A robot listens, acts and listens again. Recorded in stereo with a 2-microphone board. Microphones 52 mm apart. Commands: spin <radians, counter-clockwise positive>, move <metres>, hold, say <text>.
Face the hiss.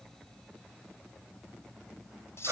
hold
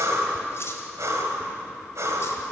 hold
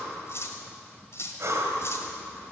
say I can't make out a hiss to turn to.